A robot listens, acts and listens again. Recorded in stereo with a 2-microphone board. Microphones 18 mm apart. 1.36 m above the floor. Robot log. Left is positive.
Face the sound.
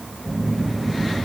note: The phone buzzing: about 20° left or 160° left.
cmd yaw +20
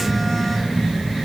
end: Found it: a phone buzzing, straight ahead.